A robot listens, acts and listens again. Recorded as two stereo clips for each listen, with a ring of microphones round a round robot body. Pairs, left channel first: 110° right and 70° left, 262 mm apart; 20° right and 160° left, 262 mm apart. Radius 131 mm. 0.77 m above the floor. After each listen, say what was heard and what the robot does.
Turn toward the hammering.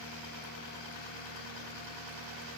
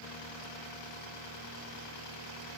Keep listening.
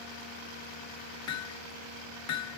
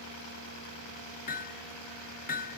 The hammering: 85° right. Turn 85° right.
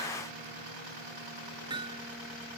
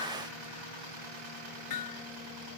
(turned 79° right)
Found it: hammering, straight ahead.